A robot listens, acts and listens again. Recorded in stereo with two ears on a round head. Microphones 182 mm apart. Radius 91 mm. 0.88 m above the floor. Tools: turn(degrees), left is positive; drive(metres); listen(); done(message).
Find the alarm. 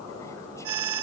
turn(degrees=-90)
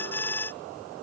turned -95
turn(degrees=10)
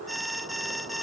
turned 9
done("Found it: an alarm, straight ahead.")